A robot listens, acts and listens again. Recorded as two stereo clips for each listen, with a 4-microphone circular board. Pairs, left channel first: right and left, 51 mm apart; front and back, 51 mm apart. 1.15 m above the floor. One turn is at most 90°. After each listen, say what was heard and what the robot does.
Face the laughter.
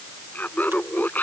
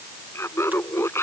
The laughter: 35° right. Turn 35° right.
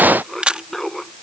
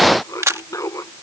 Found it: laughter, straight ahead.